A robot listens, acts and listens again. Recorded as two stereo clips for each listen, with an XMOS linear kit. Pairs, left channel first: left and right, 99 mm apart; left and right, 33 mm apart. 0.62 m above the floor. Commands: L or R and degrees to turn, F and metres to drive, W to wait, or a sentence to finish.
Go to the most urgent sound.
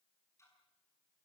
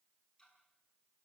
W
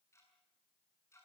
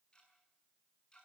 W
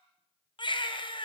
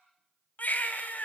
L55
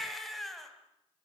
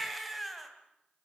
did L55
F1.0
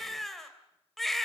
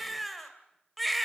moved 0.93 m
F1.0
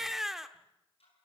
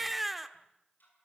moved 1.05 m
F1.0
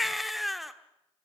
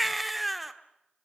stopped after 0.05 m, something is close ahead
Arrived at the baby crying, straight ahead.